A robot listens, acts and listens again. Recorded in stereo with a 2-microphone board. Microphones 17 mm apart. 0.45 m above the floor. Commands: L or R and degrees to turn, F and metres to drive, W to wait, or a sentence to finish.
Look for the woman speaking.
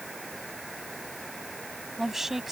R30
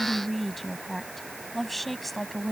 Facing the woman speaking.